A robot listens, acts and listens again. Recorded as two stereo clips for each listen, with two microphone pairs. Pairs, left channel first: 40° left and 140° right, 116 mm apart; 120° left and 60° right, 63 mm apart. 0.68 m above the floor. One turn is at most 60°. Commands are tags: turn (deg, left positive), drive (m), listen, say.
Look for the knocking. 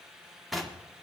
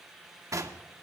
<turn deg="-45"/>
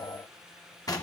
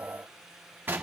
<say>Found it: knocking, straight ahead, 1 to 2 m away.</say>